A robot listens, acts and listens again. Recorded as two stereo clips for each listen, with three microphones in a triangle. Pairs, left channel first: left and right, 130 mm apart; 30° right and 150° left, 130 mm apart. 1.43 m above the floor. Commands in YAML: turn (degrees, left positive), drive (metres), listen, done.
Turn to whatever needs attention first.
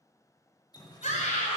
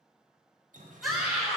turn: 60
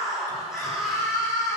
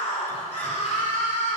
done: "Found it: a scream, straight ahead, over 4 m away."